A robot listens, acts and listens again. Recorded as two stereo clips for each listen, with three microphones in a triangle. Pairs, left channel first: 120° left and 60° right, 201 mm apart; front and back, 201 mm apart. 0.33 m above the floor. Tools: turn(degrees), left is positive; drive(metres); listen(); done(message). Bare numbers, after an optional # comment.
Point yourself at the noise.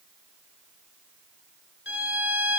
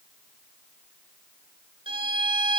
# The violin: 120° left.
turn(120)
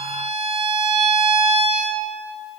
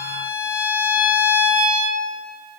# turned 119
done("Found it: a violin, straight ahead, under 1 m away.")